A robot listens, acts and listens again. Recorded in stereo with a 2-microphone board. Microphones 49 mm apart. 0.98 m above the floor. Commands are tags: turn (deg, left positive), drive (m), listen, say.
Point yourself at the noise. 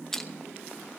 <turn deg="30"/>
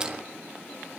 <listen/>
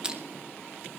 <turn deg="-20"/>
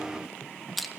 <say>Found it: crushing, straight ahead.</say>